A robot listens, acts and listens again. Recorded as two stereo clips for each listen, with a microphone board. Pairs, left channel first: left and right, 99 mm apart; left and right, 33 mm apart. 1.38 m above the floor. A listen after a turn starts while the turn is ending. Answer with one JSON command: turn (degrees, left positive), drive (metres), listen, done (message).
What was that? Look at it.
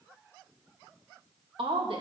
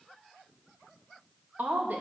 {"turn": -65}
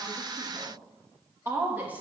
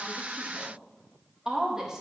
{"turn": -15}
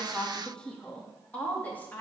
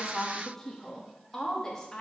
{"turn": 20}
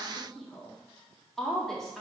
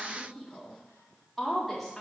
{"done": "Facing the woman speaking, 2 to 4 m away."}